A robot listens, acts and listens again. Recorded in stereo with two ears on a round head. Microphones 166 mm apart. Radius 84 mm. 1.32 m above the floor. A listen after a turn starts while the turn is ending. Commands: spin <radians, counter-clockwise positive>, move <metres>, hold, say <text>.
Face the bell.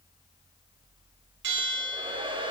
spin -1.22
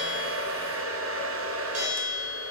spin -0.70
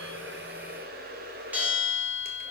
spin -0.17
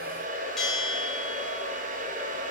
say Found it: a bell, straight ahead.